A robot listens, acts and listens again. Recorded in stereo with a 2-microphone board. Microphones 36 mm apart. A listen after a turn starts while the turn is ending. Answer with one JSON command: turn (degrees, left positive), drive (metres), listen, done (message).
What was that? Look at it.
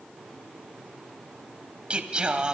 {"turn": -25}
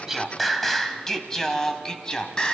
{"turn": 25}
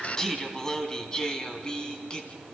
{"turn": 25}
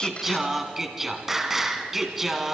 {"turn": -10}
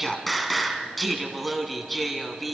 {"done": "Facing the singing, 2 to 4 m away."}